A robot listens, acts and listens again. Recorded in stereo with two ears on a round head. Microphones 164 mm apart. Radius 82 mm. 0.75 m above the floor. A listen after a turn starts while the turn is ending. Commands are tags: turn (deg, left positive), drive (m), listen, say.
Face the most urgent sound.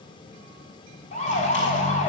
<turn deg="40"/>
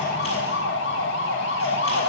<turn deg="100"/>
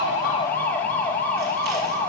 <turn deg="10"/>
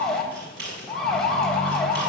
<say>Facing the siren.</say>